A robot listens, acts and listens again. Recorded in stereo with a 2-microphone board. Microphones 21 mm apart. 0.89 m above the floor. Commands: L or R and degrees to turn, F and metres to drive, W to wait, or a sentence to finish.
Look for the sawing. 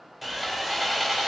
L30
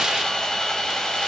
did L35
L145
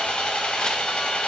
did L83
L60
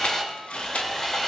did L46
L15
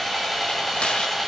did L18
Found it: sawing, straight ahead, 1 to 2 m away.